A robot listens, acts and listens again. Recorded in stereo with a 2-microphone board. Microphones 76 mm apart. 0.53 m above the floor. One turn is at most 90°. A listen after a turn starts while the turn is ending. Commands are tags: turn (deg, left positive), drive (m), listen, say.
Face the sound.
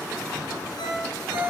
<turn deg="90"/>
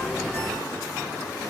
<listen/>
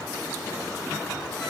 <listen/>
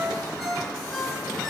<say>Facing the ringtone, over 4 m away.</say>